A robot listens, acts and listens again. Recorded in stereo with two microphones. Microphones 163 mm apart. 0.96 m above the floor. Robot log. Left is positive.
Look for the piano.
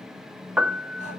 cmd yaw -30
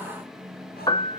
note: So it is at 25° left.
cmd yaw +25
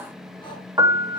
note: The piano is now 20° right.
cmd yaw -20
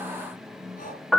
end: Facing the piano.